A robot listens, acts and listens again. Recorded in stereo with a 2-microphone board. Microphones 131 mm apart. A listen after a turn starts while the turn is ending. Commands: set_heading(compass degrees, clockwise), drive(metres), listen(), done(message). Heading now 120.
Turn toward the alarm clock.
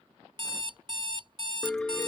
set_heading(160)
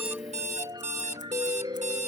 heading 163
set_heading(258)
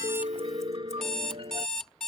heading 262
done("Found it: an alarm clock, straight ahead.")